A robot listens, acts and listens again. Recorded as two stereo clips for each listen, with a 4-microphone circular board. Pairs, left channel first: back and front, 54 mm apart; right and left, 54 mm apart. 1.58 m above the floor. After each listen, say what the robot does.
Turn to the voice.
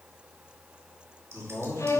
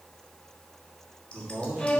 Turn 145° left.
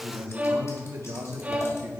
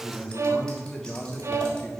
Turn 20° right.
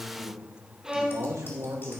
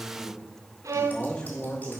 Turn 20° right.
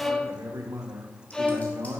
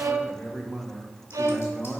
Facing the man speaking, 1 to 2 m away.